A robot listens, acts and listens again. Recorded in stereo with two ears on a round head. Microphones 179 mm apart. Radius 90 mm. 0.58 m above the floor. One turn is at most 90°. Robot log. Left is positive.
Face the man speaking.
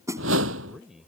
cmd yaw +30
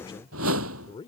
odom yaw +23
note: So it is at 155° left.
cmd yaw +90
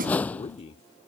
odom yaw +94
note: The man speaking is now 30° left.
cmd yaw +30
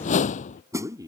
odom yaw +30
note: The man speaking is now 20° right.
cmd yaw -20
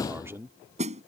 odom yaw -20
note: The man speaking is now 10° right.
cmd yaw -10
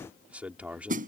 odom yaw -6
end: Found it: a man speaking, straight ahead.